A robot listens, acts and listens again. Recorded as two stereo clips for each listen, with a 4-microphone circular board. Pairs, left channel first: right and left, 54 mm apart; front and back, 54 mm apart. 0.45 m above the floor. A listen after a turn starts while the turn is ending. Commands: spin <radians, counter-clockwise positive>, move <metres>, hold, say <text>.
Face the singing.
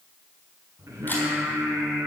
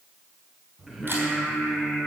spin 1.66
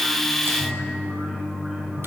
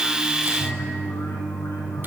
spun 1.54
spin 0.17
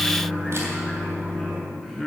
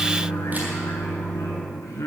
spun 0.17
say Facing the singing.